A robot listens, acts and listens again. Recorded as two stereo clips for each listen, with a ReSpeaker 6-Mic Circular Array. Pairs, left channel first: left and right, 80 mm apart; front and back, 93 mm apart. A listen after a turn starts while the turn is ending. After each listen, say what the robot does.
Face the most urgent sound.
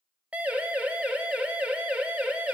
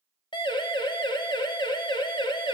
Turn 20° right.
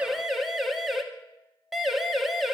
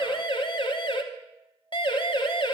Facing the siren, 2 to 4 m away.